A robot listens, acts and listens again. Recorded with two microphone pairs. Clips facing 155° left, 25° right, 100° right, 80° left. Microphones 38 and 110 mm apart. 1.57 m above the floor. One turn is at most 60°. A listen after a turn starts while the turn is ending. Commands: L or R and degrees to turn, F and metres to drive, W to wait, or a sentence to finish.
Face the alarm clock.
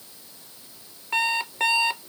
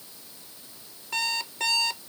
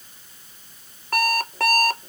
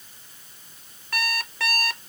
R60
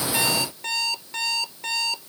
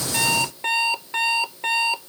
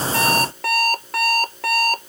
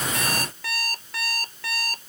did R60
R60
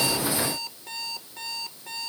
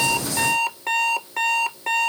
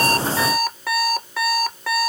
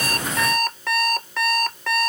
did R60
R20
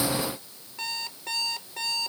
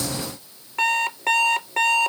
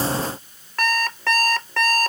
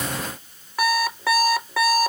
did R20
Facing the alarm clock.